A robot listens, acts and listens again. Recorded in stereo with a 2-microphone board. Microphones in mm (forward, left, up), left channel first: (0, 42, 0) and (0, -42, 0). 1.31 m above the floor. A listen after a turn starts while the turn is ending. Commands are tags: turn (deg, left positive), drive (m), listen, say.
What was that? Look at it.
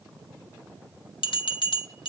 <turn deg="70"/>
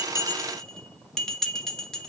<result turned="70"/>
<say>Found it: a bell, straight ahead, 1 to 2 m away.</say>